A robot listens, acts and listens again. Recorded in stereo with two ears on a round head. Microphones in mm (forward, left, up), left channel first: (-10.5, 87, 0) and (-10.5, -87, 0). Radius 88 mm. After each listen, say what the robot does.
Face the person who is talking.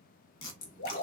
Turn 30° left.
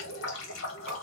Keep listening.
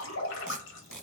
Turn 145° left.
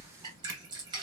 Turn 15° left.
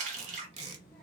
Facing the child speaking, 1 to 2 m away.